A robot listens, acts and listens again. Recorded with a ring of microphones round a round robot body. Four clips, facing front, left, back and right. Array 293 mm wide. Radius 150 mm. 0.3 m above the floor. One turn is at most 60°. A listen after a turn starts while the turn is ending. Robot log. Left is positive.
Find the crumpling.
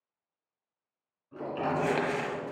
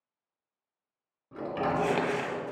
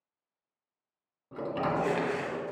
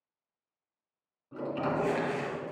note: The crumpling: 55° left.
cmd yaw +55
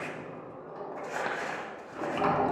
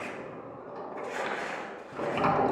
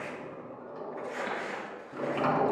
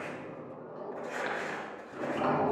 note: The crumpling is now 15° right.
cmd yaw -15
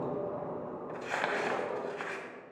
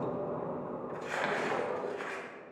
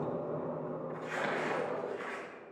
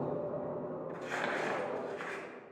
end: Found it: crumpling, straight ahead, 1 to 2 m away.